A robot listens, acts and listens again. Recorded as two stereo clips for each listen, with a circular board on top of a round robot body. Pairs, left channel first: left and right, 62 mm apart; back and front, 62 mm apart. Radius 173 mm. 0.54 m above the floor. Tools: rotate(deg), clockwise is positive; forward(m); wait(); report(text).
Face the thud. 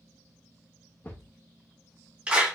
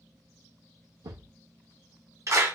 rotate(-30)
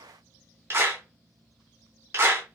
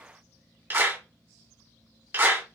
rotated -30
report("I heard a thud from this way, but can't make it out now.")